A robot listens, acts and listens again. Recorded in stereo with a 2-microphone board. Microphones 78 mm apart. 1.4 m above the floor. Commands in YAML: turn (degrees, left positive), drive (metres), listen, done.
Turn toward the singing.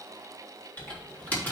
listen: true
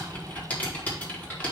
listen: true
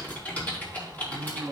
turn: 45
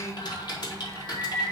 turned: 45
turn: 80
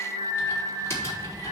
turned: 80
turn: 20
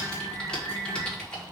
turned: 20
done: "Facing the singing, over 4 m away."